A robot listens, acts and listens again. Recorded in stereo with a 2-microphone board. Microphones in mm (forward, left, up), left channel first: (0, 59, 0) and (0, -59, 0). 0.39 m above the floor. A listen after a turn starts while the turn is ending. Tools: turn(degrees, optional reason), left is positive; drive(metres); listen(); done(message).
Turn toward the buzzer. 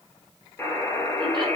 turn(degrees=20, reason="The buzzer: about 20° left or 160° left.")
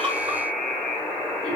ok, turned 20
done("Facing the buzzer, 2 to 4 m away.")